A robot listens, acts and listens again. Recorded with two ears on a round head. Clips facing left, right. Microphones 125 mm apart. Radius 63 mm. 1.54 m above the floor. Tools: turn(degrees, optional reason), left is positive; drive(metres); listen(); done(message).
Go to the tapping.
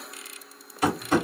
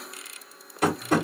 turn(degrees=-50, reason="The tapping: about 50° right or 130° right.")
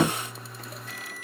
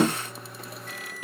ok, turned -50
turn(degrees=-75, reason="So it is at 75° right.")
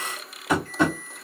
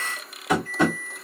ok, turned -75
drive(metres=1.0)
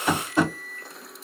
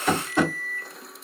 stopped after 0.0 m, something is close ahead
turn(degrees=10, reason="The tapping is now 10° left.")
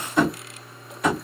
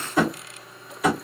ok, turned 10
done("Blocked. The tapping is further on, straight ahead.")